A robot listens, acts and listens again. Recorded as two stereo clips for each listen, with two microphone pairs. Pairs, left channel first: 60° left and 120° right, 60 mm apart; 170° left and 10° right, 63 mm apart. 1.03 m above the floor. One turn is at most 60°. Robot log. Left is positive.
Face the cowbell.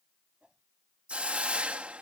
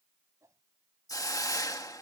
cmd idle
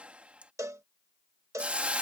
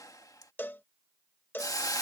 note: The cowbell: 140° right.
cmd yaw -60
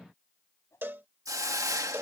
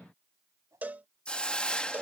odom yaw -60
note: The cowbell is now 70° right.
cmd yaw -60
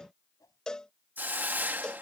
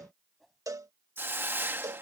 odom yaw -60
note: The cowbell is now 15° right.
cmd yaw -15
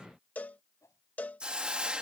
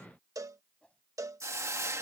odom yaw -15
end: Found it: a cowbell, straight ahead.